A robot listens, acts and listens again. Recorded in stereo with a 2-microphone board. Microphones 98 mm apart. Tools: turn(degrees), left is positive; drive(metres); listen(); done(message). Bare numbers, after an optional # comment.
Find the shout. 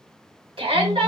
# The shout: about 65° right or 115° right.
turn(-65)
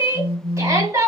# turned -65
# So it is at 35° right.
turn(-35)
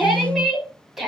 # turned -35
done("Found it: a shout, straight ahead, 2 to 4 m away.")